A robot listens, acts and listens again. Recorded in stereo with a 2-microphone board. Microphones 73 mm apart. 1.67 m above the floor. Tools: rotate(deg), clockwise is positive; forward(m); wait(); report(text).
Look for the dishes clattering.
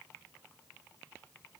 wait()
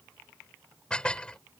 rotate(-30)
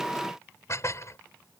rotate(-135)
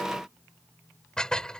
rotate(-10)
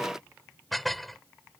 report("Facing the dishes clattering.")